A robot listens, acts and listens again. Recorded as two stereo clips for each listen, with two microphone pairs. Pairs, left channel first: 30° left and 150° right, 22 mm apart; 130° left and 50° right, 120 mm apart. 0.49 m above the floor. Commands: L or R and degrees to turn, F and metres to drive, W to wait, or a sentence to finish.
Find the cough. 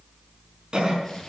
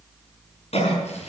L160
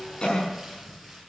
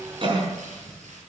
R10
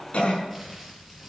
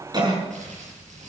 Facing the cough, over 4 m away.